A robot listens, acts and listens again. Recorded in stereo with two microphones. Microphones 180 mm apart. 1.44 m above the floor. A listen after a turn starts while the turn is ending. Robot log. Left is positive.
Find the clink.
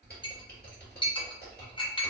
note: The clink: about 25° left or 155° left.
cmd yaw +25
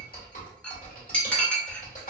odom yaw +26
note: So it is at 10° left.
cmd yaw +10
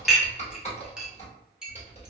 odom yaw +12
end: Facing the clink, under 1 m away.